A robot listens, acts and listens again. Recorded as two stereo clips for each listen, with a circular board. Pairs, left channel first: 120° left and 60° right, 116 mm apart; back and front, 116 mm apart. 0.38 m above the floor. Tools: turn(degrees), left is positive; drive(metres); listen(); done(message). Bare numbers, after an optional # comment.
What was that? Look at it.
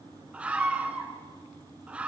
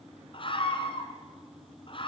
# The scream: 140° right.
turn(-140)
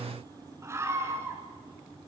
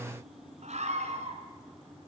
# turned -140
done("Facing the scream, 2 to 4 m away.")